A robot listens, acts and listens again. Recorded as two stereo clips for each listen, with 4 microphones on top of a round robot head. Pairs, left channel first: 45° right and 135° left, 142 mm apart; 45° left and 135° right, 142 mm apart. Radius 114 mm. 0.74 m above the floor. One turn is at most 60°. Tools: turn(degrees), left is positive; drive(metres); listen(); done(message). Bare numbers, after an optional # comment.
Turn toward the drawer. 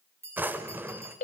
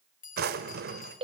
# The drawer: 145° right.
turn(-60)
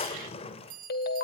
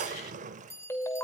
# The drawer is now 95° right.
turn(-60)
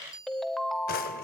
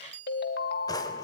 # Nothing new. It was at 35° right.
turn(-35)
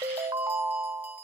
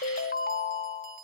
listen()
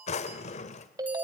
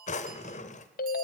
done("Found it: a drawer, straight ahead, 1 to 2 m away.")